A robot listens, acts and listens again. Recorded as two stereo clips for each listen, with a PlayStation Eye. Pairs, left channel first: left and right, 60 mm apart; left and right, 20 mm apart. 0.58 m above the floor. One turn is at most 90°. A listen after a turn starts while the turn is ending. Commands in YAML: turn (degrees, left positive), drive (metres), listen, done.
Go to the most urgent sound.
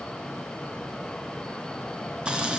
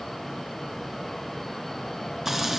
listen: true
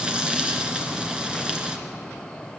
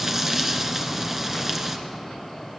listen: true
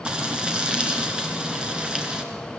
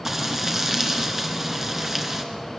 done: "I can't make out anything urgent to turn to."